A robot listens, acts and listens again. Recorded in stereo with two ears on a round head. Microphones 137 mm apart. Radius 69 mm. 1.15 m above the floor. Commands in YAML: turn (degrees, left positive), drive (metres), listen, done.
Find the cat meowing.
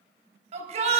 listen: true
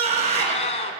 turn: 45
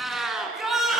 done: "Found it: a cat meowing, straight ahead."